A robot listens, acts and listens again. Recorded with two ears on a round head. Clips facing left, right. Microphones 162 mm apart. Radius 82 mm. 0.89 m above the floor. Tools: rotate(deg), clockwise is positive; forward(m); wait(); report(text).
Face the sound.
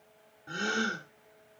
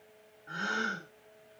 rotate(-35)
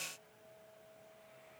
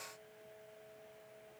wait()
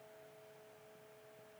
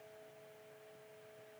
report("I heard a gasp, but can't make it out now. It was about straight ahead or 110° left.")